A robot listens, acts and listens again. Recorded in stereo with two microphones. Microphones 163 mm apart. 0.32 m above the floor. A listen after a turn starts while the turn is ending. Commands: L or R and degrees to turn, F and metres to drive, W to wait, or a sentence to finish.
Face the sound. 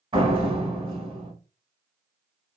R35
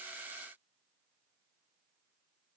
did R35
W
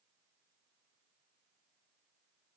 I heard a door slam, but can't make it out now. It was about straight ahead or 110° right.